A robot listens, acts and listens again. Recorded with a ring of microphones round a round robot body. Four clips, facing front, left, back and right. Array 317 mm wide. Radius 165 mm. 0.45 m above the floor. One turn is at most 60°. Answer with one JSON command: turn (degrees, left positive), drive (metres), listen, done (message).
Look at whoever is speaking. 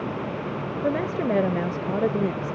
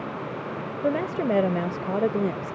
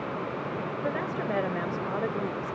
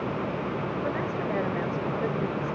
{"turn": 50}
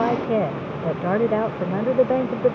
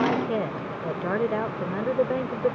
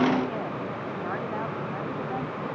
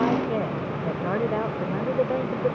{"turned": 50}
{"turn": 10}
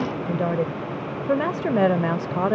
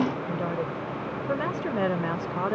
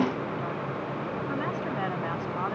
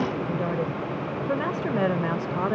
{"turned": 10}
{"done": "Found it: a woman speaking, straight ahead."}